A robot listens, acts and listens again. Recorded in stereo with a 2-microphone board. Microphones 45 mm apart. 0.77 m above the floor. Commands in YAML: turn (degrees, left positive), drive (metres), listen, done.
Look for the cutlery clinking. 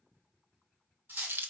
turn: -50
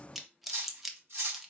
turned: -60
turn: -70
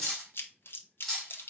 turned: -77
done: "Found it: cutlery clinking, straight ahead, 1 to 2 m away."